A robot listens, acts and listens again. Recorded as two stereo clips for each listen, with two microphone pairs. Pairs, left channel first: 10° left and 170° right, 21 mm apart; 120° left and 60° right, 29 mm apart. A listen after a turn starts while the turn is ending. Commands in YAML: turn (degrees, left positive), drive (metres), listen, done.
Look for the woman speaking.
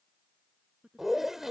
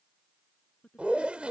turn: 170
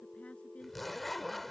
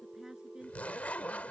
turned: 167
listen: true
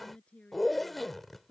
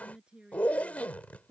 done: "Facing the woman speaking."